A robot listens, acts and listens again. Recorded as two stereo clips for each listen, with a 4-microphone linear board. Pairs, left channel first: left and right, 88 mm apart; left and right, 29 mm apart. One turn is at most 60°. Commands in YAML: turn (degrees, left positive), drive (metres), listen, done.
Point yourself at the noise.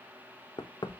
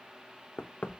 turn: 55
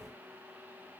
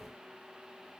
listen: true
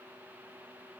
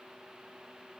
listen: true
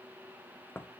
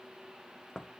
turn: 30
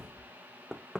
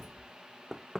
done: "Facing the knocking, under 1 m away."